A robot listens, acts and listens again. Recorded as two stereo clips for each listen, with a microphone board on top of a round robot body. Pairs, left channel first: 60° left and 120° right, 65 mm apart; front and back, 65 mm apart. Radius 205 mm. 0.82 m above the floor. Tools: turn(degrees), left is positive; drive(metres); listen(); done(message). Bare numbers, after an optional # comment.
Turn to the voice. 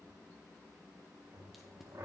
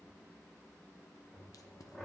listen()
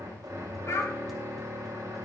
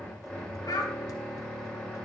# The child speaking: 15° left.
turn(15)
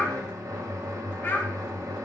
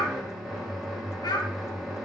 done("Facing the child speaking.")